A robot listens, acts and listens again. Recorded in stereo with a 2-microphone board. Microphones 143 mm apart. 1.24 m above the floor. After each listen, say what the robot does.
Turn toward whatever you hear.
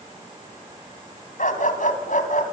Turn 65° left.
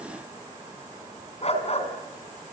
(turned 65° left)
Turn 50° left.
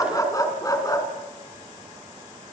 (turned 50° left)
Turn 25° left.
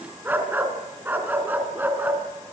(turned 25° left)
Turn 15° right.
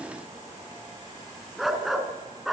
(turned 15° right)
Found it: a dog barking, straight ahead.